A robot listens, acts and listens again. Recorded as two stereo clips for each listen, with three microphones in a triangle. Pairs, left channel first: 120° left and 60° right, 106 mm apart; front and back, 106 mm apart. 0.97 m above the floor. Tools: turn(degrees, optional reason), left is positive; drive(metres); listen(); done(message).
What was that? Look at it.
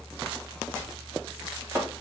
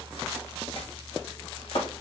done("Found it: chopping, straight ahead, 1 to 2 m away.")